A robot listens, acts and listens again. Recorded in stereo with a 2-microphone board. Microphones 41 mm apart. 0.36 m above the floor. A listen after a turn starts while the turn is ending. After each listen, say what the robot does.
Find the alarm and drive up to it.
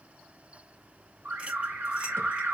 Turn 60° right.
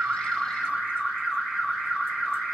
Drive 1.0 m forward.
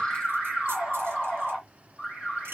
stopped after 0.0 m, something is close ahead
Blocked. The alarm is further on, straight ahead.